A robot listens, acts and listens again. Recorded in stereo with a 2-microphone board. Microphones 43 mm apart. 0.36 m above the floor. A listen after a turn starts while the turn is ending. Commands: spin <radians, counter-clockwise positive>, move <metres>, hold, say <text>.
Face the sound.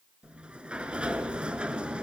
spin -0.44
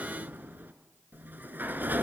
spin -2.36
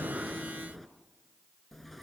say Found it: a sliding door, straight ahead, 1 to 2 m away.